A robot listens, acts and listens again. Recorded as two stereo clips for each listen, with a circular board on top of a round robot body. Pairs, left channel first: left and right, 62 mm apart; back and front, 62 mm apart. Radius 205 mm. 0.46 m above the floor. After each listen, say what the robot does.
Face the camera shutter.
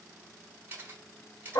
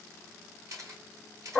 Turn 30° right.
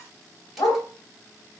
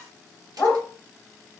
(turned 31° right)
Keep listening.
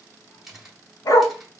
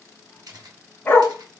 Found it: a camera shutter, straight ahead, 1 to 2 m away.